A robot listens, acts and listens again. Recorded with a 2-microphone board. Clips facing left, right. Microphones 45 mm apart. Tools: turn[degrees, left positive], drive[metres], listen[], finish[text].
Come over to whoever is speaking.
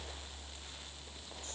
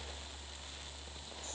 Action: listen[]
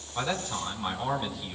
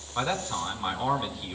Thought: The man speaking: about 15° right or 165° right.
Action: turn[-15]
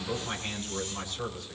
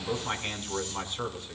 Thought: So it is at 150° right.
Action: turn[-150]
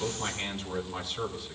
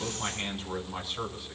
Action: drive[1.0]
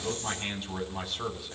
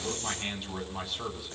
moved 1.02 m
Action: drive[1.0]
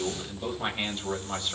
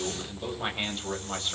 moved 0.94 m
Action: drive[1.0]
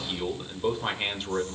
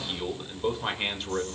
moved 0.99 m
Action: drive[1.0]
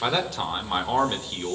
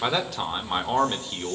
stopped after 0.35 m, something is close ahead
Action: finish[Arrived at the man speaking, straight ahead.]